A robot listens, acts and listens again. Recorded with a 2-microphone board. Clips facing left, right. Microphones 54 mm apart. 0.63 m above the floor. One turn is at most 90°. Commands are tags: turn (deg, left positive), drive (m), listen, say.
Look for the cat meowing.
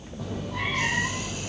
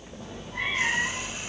<turn deg="75"/>
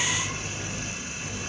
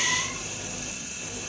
<turn deg="10"/>
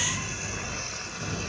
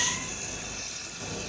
<say>Found it: a cat meowing, straight ahead.</say>